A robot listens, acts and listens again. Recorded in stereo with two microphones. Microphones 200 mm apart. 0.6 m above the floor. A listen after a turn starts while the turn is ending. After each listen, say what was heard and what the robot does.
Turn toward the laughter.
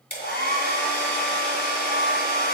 Keep listening.
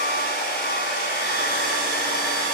Keep listening.
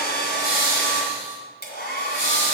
Turn 90° left.
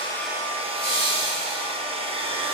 Found it: laughter, straight ahead, 2 to 4 m away.